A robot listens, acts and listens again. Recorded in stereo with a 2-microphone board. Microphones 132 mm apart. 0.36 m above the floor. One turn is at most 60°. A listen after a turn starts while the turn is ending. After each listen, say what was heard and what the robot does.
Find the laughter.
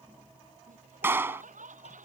Turn 60° right.
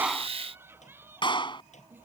Nothing new. It was at 30° right. Turn 30° right.
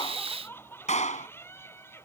The laughter is now 20° left. Turn 20° left.
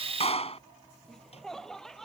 Facing the laughter.